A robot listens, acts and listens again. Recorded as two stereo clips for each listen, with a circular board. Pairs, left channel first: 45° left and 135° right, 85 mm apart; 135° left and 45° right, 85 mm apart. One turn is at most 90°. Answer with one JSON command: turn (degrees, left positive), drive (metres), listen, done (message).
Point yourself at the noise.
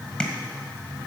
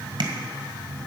{"turn": -35}
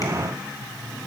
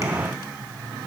{"listen": true}
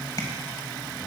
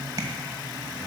{"done": "Facing the tapping."}